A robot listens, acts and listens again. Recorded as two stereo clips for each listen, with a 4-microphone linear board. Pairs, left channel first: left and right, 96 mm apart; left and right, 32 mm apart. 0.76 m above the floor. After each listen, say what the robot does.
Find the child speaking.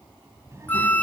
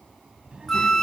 Turn 30° right.
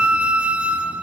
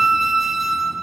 Keep listening.
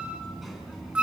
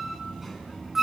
Found it: a child speaking, straight ahead, over 4 m away.